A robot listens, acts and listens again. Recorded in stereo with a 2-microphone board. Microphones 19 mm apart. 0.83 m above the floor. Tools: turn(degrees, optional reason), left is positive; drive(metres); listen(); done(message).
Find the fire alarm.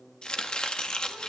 listen()
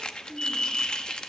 turn(degrees=50, reason="The fire alarm: about 50° left or 130° left.")
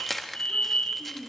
turn(degrees=80, reason="So it is at 80° left.")
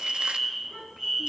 turn(degrees=-15, reason="The fire alarm is now 15° right.")
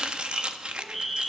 done("Found it: a fire alarm, straight ahead, over 4 m away.")